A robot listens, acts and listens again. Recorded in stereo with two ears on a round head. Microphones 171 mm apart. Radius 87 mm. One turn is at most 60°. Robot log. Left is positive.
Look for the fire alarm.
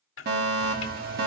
note: The fire alarm: about 55° right or 125° right.
cmd yaw -55
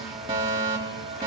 note: So it is at 35° right.
cmd yaw -35
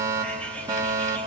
note: The fire alarm is now 25° right.
cmd yaw -25
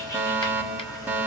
note: The fire alarm is now 10° right.
cmd yaw -10
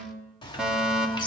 end: Facing the fire alarm.